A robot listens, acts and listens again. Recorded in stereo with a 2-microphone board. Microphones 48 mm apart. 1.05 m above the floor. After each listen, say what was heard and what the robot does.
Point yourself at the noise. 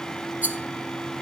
The rattle: about 35° right or 145° right. Turn 35° right.
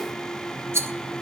So it is at 110° right. Turn 110° right.
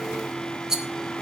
The rattle is now 10° right. Turn 10° right.
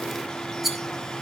Facing the rattle.